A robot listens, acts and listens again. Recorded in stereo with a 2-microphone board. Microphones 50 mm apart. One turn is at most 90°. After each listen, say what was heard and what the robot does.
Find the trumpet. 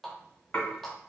Keep listening.
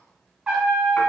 The trumpet: about 25° right or 155° right. Turn 25° right.
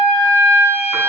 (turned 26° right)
So it is at 130° right. Turn 90° right.
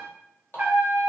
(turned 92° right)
The trumpet is now 35° right. Turn 35° right.
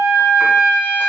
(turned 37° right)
Facing the trumpet.